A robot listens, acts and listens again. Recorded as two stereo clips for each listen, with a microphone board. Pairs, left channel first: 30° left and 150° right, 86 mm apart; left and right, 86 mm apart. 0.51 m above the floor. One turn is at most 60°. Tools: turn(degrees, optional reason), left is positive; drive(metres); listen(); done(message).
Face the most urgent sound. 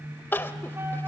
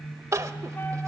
turn(degrees=-35, reason="The crying: 35° right.")
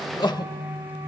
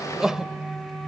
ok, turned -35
done("Facing the crying, under 1 m away.")